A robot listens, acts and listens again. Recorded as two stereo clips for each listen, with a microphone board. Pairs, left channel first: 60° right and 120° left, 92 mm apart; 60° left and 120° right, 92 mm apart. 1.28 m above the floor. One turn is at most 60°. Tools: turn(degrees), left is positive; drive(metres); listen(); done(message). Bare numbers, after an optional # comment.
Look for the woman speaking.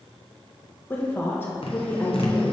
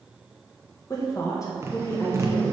done("Facing the woman speaking, 1 to 2 m away.")